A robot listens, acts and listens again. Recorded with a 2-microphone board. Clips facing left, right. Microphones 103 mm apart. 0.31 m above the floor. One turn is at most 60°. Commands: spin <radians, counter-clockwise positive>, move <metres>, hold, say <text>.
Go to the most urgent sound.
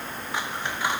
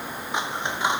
hold
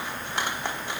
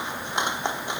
hold
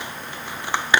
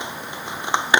say I can't make out anything urgent to turn to.